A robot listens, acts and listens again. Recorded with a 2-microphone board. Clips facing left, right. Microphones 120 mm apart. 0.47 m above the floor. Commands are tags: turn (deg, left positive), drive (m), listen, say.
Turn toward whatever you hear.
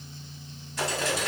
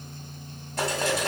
<turn deg="-55"/>
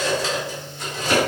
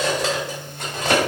<turn deg="-70"/>
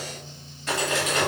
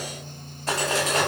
<turn deg="-35"/>
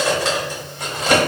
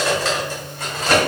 <turn deg="20"/>
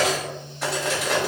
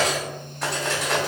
<say>Found it: cutlery clinking, straight ahead.</say>